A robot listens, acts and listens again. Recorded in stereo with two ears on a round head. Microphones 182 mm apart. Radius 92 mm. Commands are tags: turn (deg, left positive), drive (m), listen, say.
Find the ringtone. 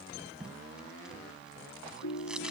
<turn deg="75"/>
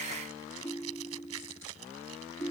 <say>Found it: a ringtone, straight ahead.</say>